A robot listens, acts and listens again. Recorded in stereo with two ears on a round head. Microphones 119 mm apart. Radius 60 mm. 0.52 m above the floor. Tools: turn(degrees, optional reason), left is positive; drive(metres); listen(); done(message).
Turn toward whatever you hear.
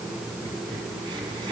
turn(degrees=-35, reason="The crack: about 35° right or 145° right.")
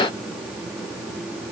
listen()
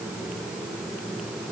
done("I heard a crack, but can't make it out now. It was about straight ahead or 110° right.")